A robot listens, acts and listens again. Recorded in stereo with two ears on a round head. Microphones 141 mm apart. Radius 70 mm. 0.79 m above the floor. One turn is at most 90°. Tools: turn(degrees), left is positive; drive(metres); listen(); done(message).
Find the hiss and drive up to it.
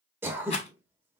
listen()
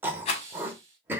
turn(degrees=-20)
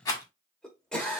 listen()
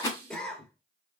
turn(degrees=-90)
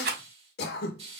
turn(degrees=-40)
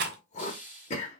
turn(degrees=-10)
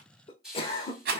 drive(metres=1.0)
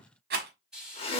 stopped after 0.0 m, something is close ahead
done("Something is in my way. I am facing the hiss but have not reached it.")